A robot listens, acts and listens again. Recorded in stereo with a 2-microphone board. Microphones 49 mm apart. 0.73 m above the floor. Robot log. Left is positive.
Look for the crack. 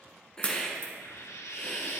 note: The crack: about 35° left or 145° left.
cmd yaw +35
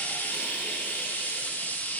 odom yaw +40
cmd idle
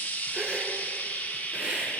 end: I heard a crack, but can't make it out now. It was about 5° right or 105° left.